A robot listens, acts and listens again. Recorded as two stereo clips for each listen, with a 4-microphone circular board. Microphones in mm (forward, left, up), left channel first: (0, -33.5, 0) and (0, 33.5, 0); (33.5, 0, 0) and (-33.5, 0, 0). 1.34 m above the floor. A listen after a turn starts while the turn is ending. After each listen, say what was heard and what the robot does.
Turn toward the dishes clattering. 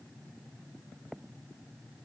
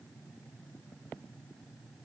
Keep listening.
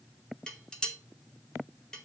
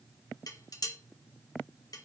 The dishes clattering: 15° right. Turn 15° right.
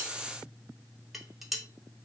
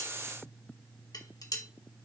Facing the dishes clattering, 1 to 2 m away.